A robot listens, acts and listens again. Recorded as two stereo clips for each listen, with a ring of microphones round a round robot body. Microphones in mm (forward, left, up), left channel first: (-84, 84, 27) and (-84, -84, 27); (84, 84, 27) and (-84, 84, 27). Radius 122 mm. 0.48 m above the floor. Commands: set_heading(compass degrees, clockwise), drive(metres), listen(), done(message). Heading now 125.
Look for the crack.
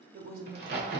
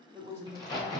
set_heading(195)
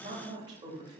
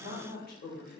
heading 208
set_heading(193)
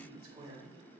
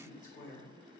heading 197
done("Facing where the crack came from. I can't hear it now.")